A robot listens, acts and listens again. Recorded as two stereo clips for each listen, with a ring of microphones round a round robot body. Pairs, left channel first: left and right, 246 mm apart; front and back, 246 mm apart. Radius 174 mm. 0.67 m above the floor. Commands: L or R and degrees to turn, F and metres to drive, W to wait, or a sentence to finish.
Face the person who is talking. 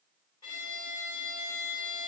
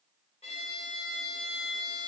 W
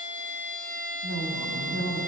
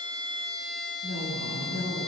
R125
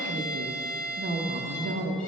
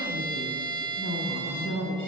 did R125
R45
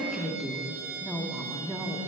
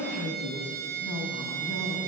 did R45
Facing the woman speaking.